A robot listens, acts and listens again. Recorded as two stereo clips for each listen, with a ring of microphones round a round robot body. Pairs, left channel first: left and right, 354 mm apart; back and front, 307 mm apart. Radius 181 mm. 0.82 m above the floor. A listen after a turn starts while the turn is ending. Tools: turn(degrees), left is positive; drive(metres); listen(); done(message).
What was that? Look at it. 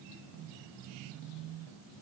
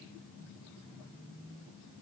listen()
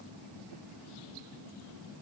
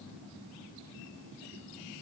listen()
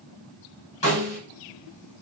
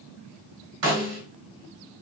turn(degrees=15)
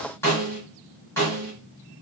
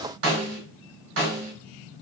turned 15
done("Found it: a snare drum, straight ahead, 1 to 2 m away.")